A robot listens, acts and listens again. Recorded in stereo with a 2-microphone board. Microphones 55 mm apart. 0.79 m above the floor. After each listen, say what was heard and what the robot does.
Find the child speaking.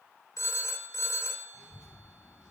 The child speaking: about 15° right or 165° right. Turn 15° right.
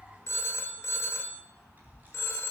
The child speaking: about 35° right or 145° right. Turn 35° right.
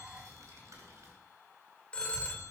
So it is at 95° right. Turn 95° right.
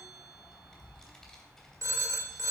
The child speaking is now 10° left. Turn 10° left.
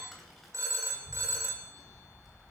Found it: a child speaking, straight ahead.